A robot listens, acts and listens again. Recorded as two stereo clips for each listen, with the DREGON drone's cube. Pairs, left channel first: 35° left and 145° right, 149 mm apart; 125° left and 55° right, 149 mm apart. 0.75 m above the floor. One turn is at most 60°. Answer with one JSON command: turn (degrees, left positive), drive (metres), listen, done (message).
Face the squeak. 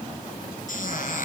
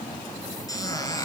{"turn": 60}
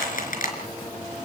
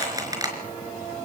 {"turn": 10}
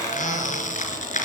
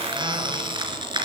{"done": "Facing the squeak."}